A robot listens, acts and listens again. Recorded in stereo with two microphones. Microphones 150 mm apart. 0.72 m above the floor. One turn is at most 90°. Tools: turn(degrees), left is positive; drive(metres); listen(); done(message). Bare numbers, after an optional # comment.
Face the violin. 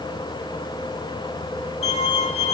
# The violin: about 40° left or 140° left.
turn(40)
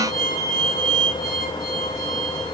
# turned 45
# So it is at 90° left.
turn(90)
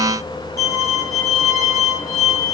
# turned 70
# The violin is now 20° left.
turn(20)
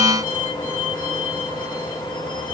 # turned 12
# The violin is now 10° left.
turn(10)
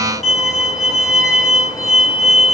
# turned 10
done("Found it: a violin, straight ahead, 1 to 2 m away.")